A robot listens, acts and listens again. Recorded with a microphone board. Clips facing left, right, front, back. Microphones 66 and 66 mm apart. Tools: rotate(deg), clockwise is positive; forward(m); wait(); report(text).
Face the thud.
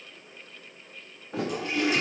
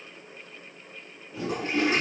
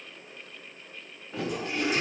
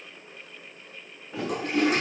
rotate(-95)
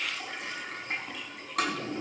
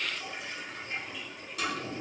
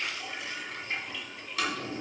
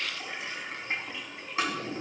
report("Facing where the thud came from. I can't hear it now.")